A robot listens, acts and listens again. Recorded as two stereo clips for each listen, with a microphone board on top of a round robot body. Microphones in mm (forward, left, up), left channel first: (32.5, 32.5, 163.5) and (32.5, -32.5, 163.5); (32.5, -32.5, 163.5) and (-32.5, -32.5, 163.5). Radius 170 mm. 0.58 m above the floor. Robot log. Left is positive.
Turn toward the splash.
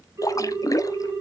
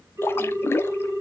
note: The splash: 55° left.
cmd yaw +55
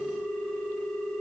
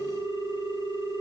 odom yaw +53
end: Facing where the splash came from. I can't hear it now.